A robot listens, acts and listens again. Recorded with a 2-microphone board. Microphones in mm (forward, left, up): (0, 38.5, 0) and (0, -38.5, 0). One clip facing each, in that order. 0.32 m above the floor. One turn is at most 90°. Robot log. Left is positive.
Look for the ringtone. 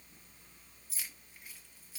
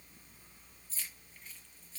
cmd idle
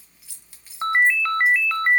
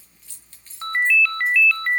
note: The ringtone: about 30° left or 150° left.
cmd yaw +30
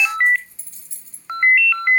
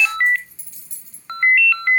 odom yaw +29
note: So it is at 10° left.
cmd yaw +10
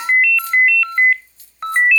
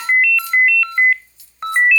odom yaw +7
end: Facing the ringtone, 1 to 2 m away.